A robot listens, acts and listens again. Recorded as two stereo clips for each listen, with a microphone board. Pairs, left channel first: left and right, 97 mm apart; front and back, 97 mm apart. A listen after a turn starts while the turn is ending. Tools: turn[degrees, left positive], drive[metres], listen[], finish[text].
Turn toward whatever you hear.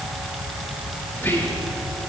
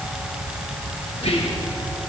Thought: The whispering: 20° left.
Action: turn[20]
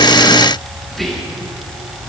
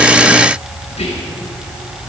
Action: finish[Facing the whispering.]